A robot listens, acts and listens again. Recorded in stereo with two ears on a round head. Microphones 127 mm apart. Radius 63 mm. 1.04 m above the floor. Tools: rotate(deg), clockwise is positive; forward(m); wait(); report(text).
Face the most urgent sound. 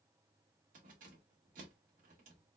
wait()
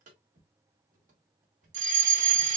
rotate(55)
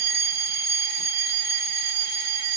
rotate(45)
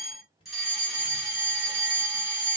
report("Found it: a fire alarm, straight ahead, 2 to 4 m away.")